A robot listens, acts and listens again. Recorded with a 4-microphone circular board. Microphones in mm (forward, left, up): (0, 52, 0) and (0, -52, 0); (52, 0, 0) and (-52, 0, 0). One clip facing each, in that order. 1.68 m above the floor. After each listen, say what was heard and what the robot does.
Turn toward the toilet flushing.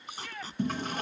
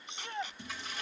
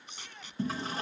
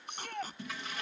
The toilet flushing: 50° left. Turn 50° left.
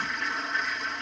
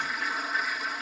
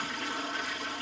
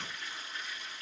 Found it: a toilet flushing, straight ahead.